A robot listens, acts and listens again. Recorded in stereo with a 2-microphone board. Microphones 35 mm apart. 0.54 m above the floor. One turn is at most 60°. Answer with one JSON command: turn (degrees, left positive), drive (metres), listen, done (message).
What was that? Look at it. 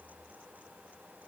{"listen": true}
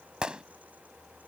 {"turn": -30}
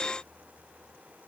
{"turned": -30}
{"listen": true}
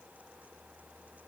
{"done": "I heard a gunshot, but can't make it out now. It was about straight ahead or 120° right."}